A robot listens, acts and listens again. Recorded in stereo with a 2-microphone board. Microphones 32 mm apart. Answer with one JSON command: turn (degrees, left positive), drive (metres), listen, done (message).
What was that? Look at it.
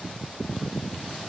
{"listen": true}
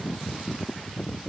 {"listen": true}
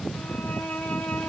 {"turn": 65}
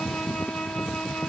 {"turn": 45}
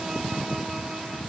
{"listen": true}
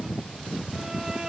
{"turn": -20}
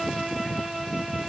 {"done": "Found it: a violin, straight ahead, 1 to 2 m away."}